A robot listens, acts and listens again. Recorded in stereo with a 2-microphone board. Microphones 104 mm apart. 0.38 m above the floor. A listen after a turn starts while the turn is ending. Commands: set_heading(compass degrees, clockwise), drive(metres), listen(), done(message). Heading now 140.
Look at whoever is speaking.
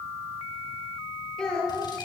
set_heading(110)
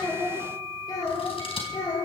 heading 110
set_heading(335)
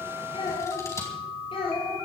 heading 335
set_heading(270)
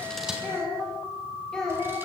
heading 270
done("Found it: a child speaking, straight ahead, over 4 m away.")